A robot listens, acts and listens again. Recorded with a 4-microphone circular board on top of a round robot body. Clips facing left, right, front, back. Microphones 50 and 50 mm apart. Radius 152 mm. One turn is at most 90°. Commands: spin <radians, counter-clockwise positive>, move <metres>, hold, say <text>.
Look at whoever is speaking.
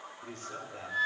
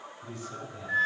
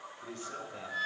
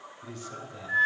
spin 0.96
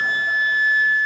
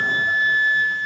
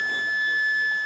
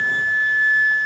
hold
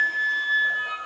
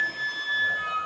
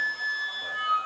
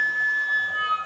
hold
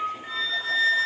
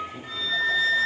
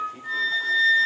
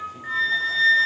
say Facing where the man speaking came from. I can't hear it now.